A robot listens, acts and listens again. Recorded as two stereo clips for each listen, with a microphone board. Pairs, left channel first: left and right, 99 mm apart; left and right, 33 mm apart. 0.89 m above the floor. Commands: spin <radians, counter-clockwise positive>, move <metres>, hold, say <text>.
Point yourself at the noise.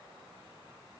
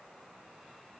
hold
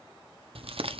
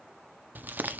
spin -1.57
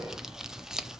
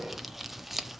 say Found it: crumpling, straight ahead, under 1 m away.